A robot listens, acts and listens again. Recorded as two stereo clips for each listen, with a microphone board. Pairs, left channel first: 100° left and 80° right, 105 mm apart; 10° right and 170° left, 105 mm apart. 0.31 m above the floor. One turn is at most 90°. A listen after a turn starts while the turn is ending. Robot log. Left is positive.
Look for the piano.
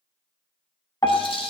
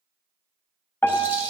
note: The piano: 50° left.
cmd yaw +50
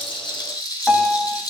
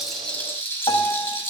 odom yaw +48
end: Found it: a piano, straight ahead.